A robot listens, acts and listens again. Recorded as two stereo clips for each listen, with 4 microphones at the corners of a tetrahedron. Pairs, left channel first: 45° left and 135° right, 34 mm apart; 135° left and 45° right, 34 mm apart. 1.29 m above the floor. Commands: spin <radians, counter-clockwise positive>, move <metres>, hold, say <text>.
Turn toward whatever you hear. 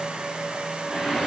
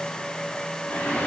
spin 2.71
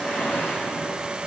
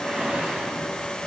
spin 0.35
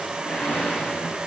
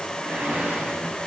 say Facing the whoosh, over 4 m away.